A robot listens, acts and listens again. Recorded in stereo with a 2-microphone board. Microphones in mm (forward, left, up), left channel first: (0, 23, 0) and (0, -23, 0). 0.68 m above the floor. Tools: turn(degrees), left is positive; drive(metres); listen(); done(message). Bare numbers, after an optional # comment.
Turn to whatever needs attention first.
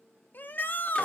# The shout: about 40° left or 140° left.
turn(40)
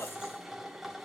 listen()
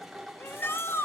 # So it is at 95° left.
turn(95)
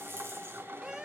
# The shout is now 15° right.
turn(-15)
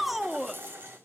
done("Facing the shout.")